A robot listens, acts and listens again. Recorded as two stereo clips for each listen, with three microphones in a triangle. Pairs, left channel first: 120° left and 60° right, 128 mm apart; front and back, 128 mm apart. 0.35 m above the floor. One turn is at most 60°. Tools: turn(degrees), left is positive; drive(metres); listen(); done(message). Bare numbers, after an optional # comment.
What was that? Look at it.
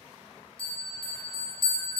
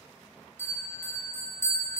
# The bell: 70° left.
turn(60)
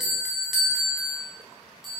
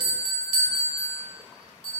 # The bell is now 25° left.
turn(25)
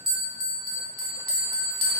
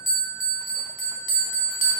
# The bell is now 10° right.
turn(-10)
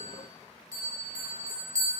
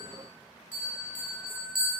done("Facing the bell, under 1 m away.")